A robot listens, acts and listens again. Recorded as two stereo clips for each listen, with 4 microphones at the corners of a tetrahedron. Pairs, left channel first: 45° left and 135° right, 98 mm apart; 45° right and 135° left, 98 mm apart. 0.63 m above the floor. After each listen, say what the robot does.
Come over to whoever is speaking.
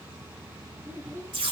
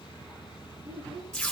Turn 160° left.
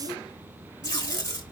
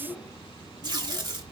Keep listening.
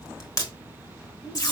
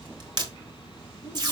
Keep listening.
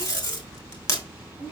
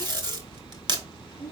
Turn 25° left.
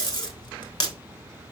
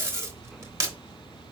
Keep listening.
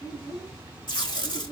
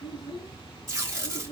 Drive 1.0 m forward.
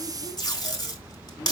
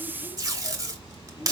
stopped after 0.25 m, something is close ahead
Keep listening.
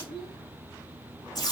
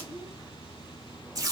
Blocked. The child speaking is further on, straight ahead.